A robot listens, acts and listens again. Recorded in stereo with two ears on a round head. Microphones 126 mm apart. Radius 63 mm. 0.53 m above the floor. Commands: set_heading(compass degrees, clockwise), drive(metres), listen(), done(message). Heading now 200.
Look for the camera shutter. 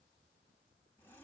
listen()
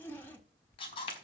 set_heading(160)
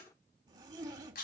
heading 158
set_heading(58)
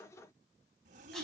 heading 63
listen()
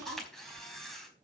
done("Found it: a camera shutter, straight ahead, over 4 m away.")